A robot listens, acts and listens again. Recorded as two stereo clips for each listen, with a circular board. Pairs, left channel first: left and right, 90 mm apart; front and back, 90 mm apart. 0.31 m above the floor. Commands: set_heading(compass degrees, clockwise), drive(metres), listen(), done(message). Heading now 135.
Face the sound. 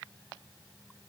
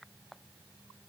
listen()
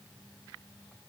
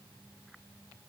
listen()
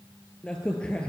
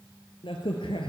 set_heading(125)
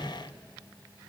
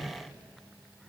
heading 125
done("Facing the crack, 1 to 2 m away.")